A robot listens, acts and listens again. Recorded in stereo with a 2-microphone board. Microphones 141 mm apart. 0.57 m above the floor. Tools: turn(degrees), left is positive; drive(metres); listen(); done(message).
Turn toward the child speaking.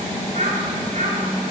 turn(degrees=-55)
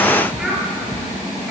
done("Facing the child speaking, over 4 m away.")